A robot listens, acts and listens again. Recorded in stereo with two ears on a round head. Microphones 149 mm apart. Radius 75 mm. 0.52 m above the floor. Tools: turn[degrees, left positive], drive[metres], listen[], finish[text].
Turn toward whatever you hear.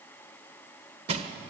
Thought: The crushing: about 40° right or 140° right.
Action: turn[-40]
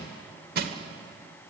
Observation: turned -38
Thought: So it is at 95° right.
Action: turn[-95]
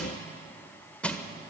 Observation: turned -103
Thought: The crushing is now 10° left.
Action: turn[10]
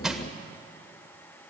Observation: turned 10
Action: finish[Found it: crushing, straight ahead.]